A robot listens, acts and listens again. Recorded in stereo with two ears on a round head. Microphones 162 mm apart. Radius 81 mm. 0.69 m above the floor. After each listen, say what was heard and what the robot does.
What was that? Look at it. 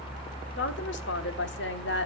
The woman speaking: about 70° left or 110° left. Turn 70° left.
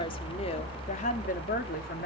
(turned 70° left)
So it is at 55° left. Turn 55° left.
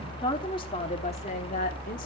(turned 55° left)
The woman speaking is now 45° left. Turn 45° left.
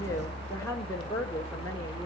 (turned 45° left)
The woman speaking is now 15° left. Turn 15° left.
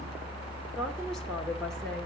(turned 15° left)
Keep listening.
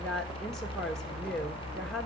Found it: a woman speaking, straight ahead.